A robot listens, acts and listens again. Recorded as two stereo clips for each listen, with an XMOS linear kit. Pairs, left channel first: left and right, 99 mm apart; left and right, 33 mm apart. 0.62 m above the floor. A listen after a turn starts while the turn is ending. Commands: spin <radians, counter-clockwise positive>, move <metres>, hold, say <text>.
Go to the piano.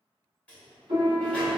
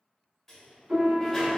spin -1.57
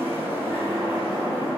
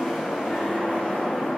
hold
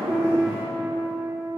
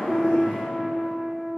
spin -0.26
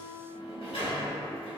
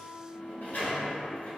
spin -0.17
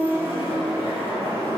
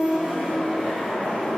move 1.0
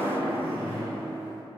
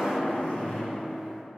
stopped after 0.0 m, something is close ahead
hold
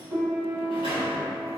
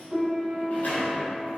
say Blocked. The piano is further on, straight ahead.